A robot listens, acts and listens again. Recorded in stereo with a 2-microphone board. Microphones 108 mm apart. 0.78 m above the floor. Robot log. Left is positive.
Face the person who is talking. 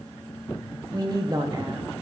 note: The woman speaking: about 35° right or 145° right.
cmd yaw -35
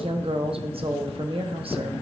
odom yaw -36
note: So it is at 100° right.
cmd yaw -100
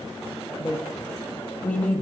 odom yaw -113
note: The woman speaking is now 15° left.
cmd yaw +15
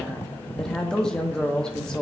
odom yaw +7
note: The woman speaking is now 10° left.
cmd yaw +10
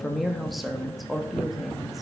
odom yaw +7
end: Found it: a woman speaking, straight ahead, under 1 m away.